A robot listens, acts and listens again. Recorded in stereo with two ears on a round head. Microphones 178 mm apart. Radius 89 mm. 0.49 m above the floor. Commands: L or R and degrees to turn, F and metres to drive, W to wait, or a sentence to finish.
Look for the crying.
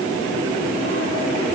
W
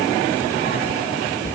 W
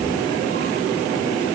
I can't make out crying, only a cupboard door.